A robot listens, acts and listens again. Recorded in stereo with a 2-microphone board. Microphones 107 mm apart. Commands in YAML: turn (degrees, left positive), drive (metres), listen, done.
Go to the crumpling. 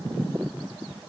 listen: true
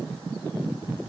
listen: true
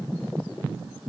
done: "I can't make out crumpling to turn to."